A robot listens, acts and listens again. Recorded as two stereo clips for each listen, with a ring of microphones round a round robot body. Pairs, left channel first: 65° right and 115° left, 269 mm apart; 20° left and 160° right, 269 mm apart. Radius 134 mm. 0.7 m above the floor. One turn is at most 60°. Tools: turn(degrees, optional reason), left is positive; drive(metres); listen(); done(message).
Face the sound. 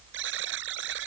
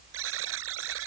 turn(degrees=60, reason="The buzzer: 160° left.")
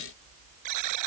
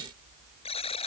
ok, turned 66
turn(degrees=60, reason="The buzzer is now 90° left.")
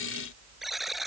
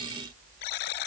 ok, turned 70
turn(degrees=25, reason="The buzzer is now 25° left.")
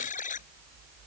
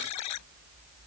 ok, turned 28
done("Facing the buzzer.")